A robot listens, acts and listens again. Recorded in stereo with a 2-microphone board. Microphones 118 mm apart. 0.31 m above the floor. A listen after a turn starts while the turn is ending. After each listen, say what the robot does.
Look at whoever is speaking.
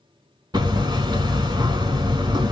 Keep listening.
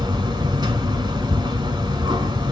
Keep listening.
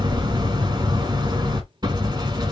I can't make out anyone speaking to turn to.